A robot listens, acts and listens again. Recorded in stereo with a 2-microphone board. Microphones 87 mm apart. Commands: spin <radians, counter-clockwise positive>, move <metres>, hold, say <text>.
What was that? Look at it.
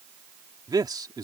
spin -0.87
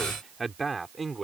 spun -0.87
say Facing the man speaking.